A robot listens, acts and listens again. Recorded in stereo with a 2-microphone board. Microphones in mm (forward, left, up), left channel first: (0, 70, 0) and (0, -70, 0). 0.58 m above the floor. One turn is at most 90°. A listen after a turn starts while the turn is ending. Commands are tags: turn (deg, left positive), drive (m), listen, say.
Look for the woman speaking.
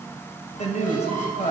<turn deg="55"/>
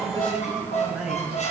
<say>Facing the woman speaking.</say>